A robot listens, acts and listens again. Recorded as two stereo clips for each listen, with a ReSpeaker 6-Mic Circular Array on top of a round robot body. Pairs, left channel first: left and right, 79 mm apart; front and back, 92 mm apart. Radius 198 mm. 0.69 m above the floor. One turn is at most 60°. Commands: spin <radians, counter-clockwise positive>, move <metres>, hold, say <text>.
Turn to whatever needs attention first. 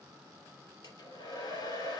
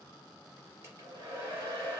hold
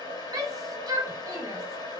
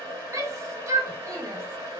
spin -1.05
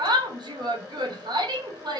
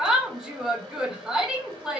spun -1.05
spin -1.05
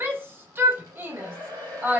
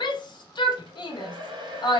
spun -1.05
spin -0.52
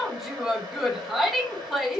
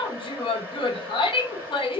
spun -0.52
say Facing the shout.